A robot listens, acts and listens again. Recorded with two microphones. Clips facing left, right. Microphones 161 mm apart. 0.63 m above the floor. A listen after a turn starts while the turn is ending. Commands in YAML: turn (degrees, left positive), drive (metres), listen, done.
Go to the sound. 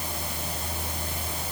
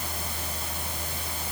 listen: true
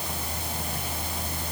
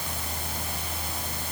listen: true
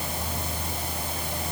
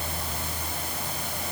done: "I can't make out anything."